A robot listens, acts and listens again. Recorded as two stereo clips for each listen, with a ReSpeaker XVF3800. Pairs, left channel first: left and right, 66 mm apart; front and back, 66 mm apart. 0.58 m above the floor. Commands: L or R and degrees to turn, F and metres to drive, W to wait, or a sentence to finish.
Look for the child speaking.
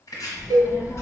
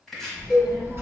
L130
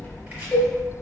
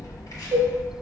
L25
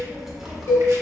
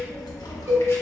Facing the child speaking, under 1 m away.